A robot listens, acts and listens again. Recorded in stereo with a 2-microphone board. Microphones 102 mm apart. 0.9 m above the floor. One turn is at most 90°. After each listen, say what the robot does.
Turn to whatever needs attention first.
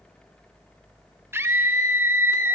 Turn 25° right.
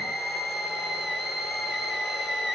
Found it: a scream, straight ahead.